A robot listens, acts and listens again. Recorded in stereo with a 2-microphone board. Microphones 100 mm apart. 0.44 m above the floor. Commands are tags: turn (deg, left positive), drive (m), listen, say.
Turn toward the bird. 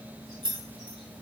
<listen/>
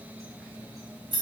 <listen/>
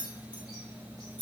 <say>I can't make out a bird to turn to.</say>